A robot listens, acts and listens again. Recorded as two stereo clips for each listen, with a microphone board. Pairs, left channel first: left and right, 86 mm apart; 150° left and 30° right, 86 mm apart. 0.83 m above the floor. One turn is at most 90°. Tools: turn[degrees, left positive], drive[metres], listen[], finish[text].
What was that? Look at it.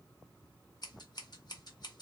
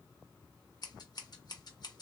Thought: The scissors: 115° left.
Action: turn[90]
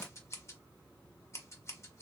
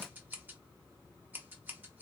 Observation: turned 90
Thought: The scissors is now 35° left.
Action: turn[35]
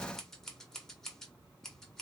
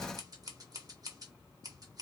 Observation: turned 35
Action: finish[Found it: scissors, straight ahead.]